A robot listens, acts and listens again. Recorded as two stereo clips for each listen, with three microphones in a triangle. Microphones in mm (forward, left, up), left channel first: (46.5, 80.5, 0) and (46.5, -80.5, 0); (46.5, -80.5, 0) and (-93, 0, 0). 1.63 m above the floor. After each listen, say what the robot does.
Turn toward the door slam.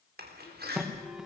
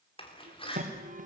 Turn 85° right.
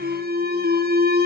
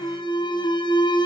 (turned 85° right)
I heard a door slam from this way, but can't make it out now.